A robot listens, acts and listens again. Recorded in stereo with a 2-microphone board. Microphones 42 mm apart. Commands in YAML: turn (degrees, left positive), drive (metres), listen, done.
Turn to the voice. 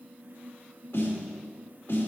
listen: true
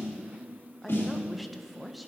turn: 30
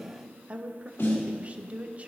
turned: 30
turn: -35
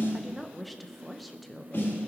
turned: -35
done: "Facing the woman speaking."